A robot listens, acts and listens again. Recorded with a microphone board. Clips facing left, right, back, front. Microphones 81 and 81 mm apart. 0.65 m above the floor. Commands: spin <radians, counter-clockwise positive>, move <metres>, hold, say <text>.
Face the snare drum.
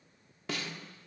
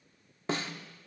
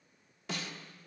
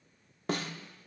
spin -0.61
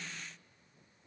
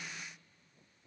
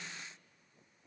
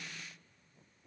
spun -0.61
say Facing the snare drum.